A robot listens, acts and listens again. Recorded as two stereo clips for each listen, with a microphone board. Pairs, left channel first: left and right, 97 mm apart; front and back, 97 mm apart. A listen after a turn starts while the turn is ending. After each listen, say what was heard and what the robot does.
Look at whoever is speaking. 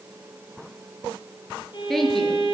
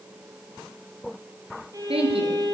The woman speaking: 175° left. Turn 175° left.
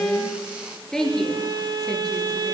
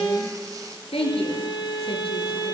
Found it: a woman speaking, straight ahead.